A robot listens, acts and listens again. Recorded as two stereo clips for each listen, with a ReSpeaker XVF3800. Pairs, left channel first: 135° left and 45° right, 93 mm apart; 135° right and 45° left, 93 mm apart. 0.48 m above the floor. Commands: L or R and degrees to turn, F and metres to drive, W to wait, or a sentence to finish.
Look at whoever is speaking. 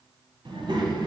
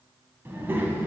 R20
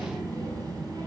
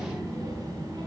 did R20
Facing the child speaking.